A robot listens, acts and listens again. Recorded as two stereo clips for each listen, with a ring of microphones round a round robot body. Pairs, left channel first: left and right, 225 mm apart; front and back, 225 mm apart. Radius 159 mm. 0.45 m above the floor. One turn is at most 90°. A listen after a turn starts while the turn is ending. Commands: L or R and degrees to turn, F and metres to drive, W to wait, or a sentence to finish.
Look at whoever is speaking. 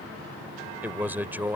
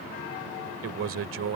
R90
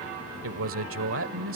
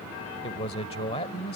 R70
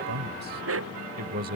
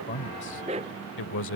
R35
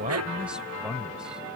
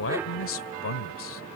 Found it: a man speaking, straight ahead.